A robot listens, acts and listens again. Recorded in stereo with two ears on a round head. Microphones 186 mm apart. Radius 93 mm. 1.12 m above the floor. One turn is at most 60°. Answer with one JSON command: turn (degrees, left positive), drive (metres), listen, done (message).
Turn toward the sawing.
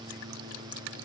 {"listen": true}
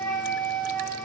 {"listen": true}
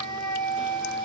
{"done": "I can't make out sawing, only a flute."}